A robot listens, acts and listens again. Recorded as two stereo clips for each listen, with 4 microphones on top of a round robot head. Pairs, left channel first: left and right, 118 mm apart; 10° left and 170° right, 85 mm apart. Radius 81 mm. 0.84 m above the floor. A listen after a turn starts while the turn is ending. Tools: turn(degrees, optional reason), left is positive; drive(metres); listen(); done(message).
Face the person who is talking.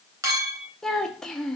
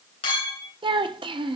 turn(degrees=175, reason="The child speaking: 175° left.")
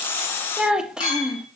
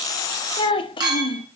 done("Found it: a child speaking, straight ahead.")